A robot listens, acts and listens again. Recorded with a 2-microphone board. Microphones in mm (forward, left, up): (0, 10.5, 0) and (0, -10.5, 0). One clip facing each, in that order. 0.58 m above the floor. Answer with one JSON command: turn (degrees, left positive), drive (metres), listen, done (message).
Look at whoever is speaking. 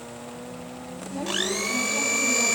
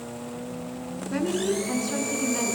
{"turn": -50}
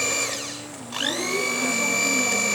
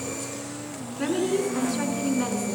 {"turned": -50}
{"turn": -80}
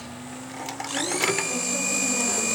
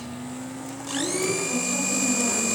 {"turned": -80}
{"listen": true}
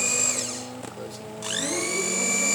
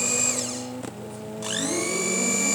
{"listen": true}
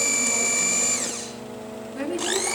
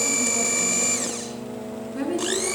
{"done": "Found it: a woman speaking, straight ahead, over 4 m away."}